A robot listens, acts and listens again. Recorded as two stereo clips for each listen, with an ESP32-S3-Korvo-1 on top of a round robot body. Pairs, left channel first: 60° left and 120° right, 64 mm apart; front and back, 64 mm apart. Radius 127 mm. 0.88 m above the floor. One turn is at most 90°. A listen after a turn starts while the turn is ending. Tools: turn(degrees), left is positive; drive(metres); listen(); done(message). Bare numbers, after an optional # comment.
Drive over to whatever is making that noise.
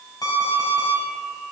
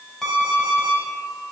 # The alarm clock: 85° left.
turn(85)
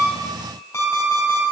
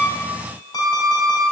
drive(1.0)
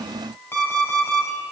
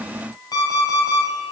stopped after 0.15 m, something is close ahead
done("Something is in my way. I am facing the alarm clock but have not reached it.")